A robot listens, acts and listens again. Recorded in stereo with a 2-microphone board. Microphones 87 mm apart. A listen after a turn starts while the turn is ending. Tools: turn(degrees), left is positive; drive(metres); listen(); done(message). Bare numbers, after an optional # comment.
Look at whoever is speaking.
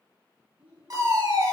# The child speaking: about 15° right or 165° right.
turn(-15)
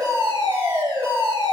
listen()
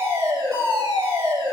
listen()
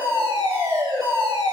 done("I heard a child speaking, but can't make it out now. It was about straight ahead or 150° right.")